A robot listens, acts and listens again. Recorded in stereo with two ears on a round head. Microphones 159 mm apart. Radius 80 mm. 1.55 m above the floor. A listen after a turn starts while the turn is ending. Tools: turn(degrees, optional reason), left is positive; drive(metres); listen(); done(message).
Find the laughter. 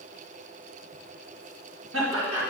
turn(degrees=-90)
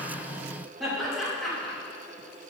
done("Found it: laughter, straight ahead, 2 to 4 m away.")